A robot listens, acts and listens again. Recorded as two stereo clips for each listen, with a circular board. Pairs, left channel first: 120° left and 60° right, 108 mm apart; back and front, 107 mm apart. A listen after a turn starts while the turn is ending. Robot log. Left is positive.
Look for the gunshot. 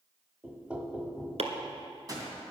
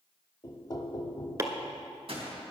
note: The gunshot: 10° right.
cmd yaw -10
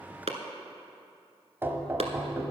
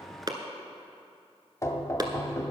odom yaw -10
end: I heard a gunshot from this way, but can't make it out now.